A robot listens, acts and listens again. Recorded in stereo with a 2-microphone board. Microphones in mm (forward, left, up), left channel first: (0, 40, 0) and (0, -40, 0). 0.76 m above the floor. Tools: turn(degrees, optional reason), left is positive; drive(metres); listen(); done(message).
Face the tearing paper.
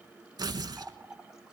turn(degrees=-60, reason="The tearing paper: about 60° right or 120° right.")
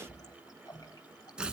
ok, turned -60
turn(degrees=-15, reason="So it is at 15° right.")
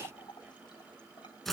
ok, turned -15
done("Found it: tearing paper, straight ahead.")